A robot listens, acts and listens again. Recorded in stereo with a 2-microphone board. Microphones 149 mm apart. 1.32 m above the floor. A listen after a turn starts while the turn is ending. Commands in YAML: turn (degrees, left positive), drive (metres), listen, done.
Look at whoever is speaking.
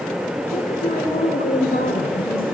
turn: 75
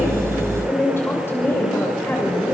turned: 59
turn: 15
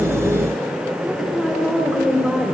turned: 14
done: "Facing the woman speaking, over 4 m away."